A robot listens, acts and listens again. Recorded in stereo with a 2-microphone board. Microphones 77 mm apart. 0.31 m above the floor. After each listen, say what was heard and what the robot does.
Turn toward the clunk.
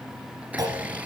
The clunk: about 55° right or 125° right. Turn 55° right.
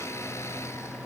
Keep listening.
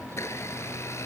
I heard a clunk, but can't make it out now. It was about straight ahead or 70° right.